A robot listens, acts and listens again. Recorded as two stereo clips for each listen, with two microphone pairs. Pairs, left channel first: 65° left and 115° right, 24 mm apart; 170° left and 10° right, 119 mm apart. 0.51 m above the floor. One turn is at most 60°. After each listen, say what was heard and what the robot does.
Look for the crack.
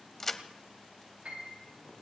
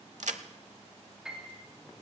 Found it: a crack, straight ahead, under 1 m away.